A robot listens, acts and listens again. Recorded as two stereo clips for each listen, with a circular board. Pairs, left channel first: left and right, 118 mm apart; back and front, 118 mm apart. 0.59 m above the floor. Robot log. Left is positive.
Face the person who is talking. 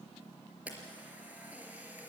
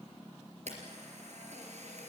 cmd idle
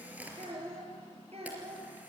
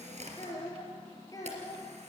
note: The child speaking: 120° right.
cmd yaw -120
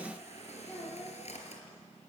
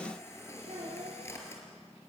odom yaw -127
note: The child speaking is now 10° left.
cmd yaw +10
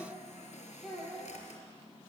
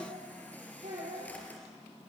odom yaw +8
end: Facing the child speaking, over 4 m away.